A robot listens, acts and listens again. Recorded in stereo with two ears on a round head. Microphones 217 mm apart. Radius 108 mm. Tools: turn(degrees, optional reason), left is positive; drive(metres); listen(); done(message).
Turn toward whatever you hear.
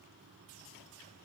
listen()
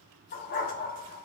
turn(degrees=40, reason="The dog barking: about 40° left or 140° left.")
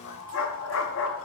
turn(degrees=95, reason="So it is at 95° left.")
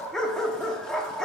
done("Facing the dog barking.")